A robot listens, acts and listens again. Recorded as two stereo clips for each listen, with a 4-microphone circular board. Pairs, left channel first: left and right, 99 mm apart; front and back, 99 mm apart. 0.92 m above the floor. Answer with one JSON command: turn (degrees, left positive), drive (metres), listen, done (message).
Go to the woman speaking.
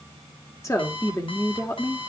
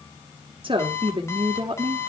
{"turn": 150}
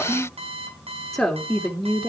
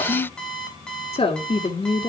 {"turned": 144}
{"drive": 1.0}
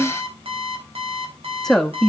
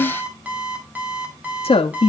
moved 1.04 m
{"drive": 1.0}
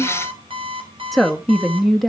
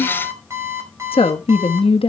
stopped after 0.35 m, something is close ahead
{"done": "I am next to the woman speaking."}